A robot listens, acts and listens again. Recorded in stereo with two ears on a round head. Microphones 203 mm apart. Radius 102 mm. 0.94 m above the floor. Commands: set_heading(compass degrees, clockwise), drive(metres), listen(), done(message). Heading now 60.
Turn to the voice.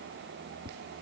listen()
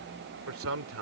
set_heading(125)
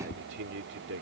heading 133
set_heading(188)
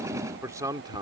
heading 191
set_heading(211)
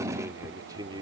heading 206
set_heading(226)
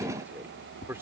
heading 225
set_heading(235)
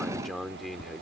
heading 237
done("Facing the man speaking.")